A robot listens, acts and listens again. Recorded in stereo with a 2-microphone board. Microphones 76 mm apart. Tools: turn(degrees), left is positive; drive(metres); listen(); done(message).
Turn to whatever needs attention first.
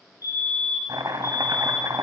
turn(degrees=55)
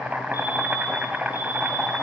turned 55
listen()
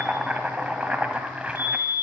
turn(degrees=65)
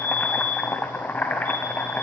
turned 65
turn(degrees=25)
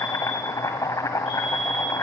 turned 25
done("Facing the fire alarm.")